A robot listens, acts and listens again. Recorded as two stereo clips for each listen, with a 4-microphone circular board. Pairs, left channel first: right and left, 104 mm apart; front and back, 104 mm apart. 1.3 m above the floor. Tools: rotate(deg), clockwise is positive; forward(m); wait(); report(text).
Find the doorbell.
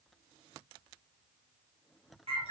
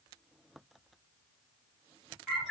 wait()
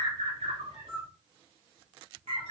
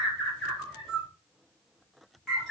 wait()
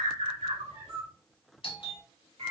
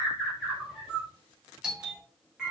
rotate(95)
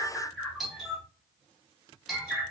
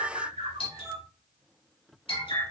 report("Found it: a doorbell, straight ahead, under 1 m away.")